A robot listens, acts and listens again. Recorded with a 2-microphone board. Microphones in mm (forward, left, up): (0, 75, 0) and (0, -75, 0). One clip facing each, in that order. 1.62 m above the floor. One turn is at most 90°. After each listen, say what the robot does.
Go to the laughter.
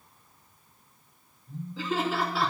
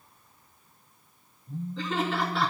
Turn 30° left.
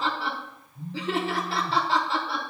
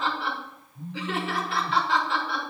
Turn 90° left.
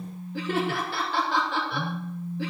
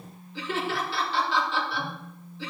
Turn 55° left.
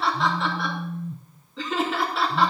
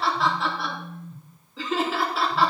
Drive 1.0 m forward.
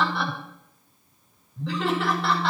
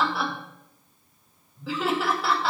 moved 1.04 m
Drive 1.0 m forward.
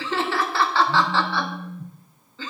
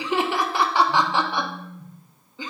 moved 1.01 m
Turn 15° right.
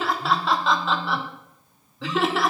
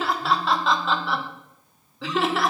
Drive 1.0 m forward.
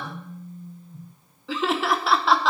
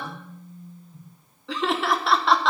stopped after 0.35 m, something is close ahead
Arrived at the laughter, straight ahead.